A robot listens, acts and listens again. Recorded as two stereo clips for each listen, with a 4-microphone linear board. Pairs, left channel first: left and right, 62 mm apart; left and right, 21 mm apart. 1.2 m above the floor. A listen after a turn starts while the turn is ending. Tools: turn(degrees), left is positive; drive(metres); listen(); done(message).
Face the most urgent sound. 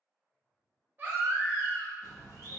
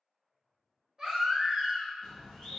turn(degrees=-30)
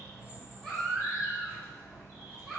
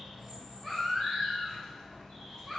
done("Facing the baby crying.")